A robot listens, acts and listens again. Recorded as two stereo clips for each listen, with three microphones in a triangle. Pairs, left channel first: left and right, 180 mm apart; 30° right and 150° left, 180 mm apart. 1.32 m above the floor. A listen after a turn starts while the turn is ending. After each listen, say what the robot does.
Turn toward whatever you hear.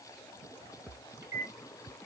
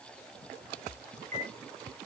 Turn 165° right.
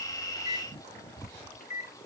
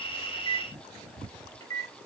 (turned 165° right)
Turn 40° left.
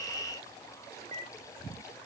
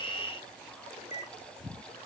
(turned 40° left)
Turn 20° left.
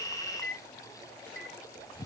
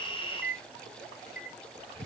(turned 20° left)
Facing the microwave.